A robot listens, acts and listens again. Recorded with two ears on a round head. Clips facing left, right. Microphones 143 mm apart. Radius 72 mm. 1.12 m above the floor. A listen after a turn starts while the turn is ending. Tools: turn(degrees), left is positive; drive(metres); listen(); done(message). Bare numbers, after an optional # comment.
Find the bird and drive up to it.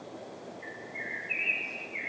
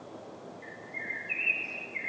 # The bird: about 50° right or 130° right.
turn(-50)
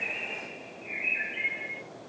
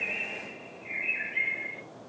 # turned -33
# So it is at 20° right.
turn(-20)
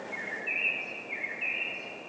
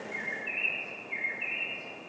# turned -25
drive(1.0)
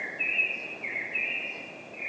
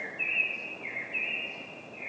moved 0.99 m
# The bird is now 10° left.
turn(10)
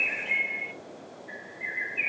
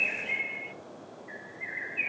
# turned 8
drive(1.0)
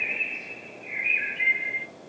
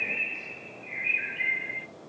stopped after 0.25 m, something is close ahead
done("I am next to the bird.")